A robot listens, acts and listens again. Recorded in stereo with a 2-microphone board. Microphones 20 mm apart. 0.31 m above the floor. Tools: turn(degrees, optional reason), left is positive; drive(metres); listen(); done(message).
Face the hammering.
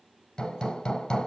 turn(degrees=45, reason="The hammering: about 45° left or 135° left.")
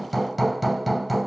done("Facing the hammering, 1 to 2 m away.")